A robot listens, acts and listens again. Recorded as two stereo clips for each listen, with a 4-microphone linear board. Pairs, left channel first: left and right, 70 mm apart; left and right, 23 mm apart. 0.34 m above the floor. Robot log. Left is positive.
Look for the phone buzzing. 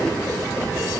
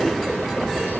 cmd idle
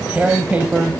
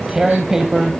cmd idle
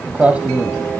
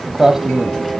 end: I can't make out a phone buzzing to turn to.